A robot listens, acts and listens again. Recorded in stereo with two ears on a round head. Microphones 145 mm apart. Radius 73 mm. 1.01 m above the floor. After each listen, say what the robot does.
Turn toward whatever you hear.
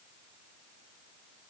Keep listening.
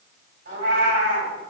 Turn 90° right.
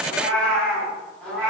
Facing the cat meowing.